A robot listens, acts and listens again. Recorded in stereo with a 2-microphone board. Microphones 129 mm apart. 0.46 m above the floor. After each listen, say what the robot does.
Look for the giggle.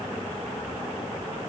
Keep listening.
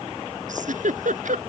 Turn 90° right.
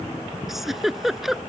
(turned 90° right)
Facing the giggle.